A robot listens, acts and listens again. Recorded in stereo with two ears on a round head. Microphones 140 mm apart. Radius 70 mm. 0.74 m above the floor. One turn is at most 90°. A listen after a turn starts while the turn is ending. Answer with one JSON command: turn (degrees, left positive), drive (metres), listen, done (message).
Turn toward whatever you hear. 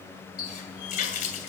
{"turn": 60}
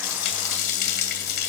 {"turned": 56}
{"turn": 65}
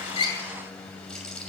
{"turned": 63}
{"done": "Facing the running tap."}